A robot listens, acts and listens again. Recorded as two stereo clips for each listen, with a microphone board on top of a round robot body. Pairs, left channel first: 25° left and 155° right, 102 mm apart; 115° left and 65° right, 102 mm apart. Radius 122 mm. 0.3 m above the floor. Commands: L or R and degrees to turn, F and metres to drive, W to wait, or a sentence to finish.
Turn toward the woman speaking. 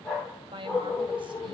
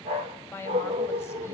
L175
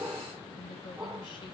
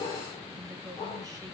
R15
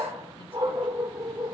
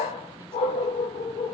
W
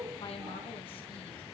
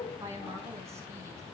Facing the woman speaking.